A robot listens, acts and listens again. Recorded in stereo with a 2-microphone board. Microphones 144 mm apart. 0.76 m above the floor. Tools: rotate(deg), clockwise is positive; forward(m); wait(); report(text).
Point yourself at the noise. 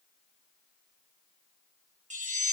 rotate(55)
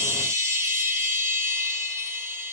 rotate(25)
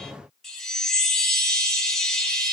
report("Found it: a chime, straight ahead, 1 to 2 m away.")